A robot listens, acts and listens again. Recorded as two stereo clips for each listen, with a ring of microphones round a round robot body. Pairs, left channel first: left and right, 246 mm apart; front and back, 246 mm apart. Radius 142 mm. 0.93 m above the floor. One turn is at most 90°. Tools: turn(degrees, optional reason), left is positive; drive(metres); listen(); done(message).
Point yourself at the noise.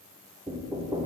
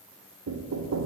turn(degrees=-90, reason="The knocking: 165° right.")
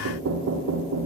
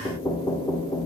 turn(degrees=-75, reason="The knocking is now 75° right.")
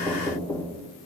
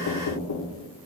done("Facing the knocking, under 1 m away.")